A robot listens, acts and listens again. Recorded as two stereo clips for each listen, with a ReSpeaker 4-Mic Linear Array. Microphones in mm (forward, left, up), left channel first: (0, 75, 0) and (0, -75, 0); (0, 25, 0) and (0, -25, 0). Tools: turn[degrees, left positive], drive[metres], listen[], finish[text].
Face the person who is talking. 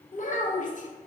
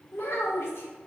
Thought: The child speaking: about 60° left or 120° left.
Action: turn[60]
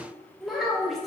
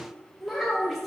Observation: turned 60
Action: finish[Facing the child speaking.]